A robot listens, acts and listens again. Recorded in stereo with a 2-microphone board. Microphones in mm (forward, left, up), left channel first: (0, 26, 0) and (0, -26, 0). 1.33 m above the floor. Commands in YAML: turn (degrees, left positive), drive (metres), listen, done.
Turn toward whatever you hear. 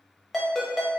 turn: 30
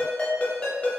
turn: 155
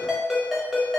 done: "Found it: a ringtone, straight ahead, 1 to 2 m away."